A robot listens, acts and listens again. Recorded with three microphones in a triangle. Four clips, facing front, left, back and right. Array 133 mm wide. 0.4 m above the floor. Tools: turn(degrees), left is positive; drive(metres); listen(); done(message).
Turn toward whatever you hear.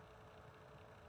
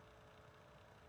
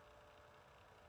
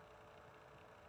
listen()
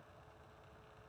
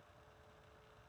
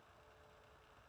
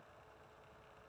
listen()
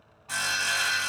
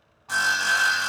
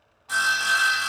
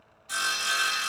turn(degrees=85)
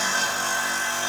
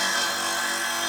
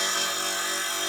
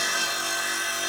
turn(degrees=30)
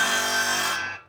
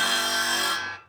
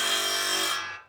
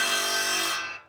turn(degrees=25)
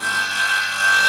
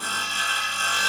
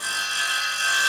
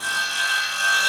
done("Facing the sawing, 1 to 2 m away.")